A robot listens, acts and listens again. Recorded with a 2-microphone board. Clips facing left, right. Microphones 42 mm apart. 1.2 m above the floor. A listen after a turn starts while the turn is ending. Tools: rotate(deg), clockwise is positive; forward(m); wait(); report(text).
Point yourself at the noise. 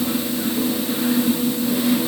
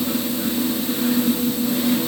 wait()
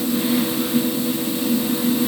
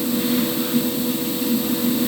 wait()
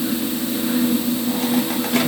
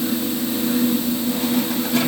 report("I can't make out anything.")